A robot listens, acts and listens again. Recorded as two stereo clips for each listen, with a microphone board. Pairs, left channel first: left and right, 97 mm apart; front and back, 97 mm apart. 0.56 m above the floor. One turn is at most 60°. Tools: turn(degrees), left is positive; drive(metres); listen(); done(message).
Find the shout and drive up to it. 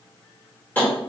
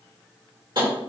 listen()
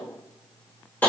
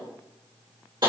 listen()
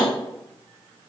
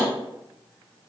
done("I can't make out a shout to turn to.")